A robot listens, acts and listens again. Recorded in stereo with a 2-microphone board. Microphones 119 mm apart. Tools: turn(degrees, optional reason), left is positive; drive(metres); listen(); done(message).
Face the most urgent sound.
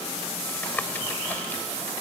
listen()
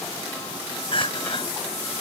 turn(degrees=50, reason="The crying: about 50° left or 130° left.")
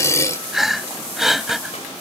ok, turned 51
done("Found it: crying, straight ahead.")